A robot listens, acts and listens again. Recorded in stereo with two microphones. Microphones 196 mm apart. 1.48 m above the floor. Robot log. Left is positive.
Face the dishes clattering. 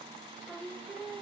cmd idle
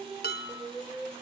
note: The dishes clattering: about 55° left or 125° left.
cmd yaw +55
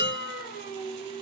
note: So it is at 65° left.
cmd yaw +65
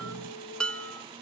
end: Found it: dishes clattering, straight ahead, 1 to 2 m away.